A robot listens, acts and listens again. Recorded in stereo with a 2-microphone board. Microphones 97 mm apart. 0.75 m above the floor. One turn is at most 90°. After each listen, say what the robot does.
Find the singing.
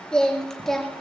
Turn 30° left.
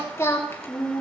Turn 90° left.
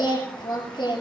Turn 60° left.
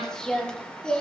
Turn 10° left.
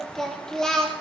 Facing the singing.